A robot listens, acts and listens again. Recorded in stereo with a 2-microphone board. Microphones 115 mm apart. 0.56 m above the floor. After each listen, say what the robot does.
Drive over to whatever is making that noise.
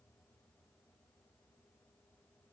Keep listening.
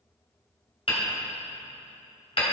Turn 55° left.
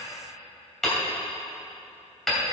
Drive 1.0 m forward.
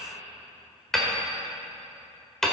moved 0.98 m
Drive 1.0 m forward.
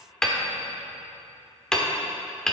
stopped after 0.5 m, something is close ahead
I am next to the hammering.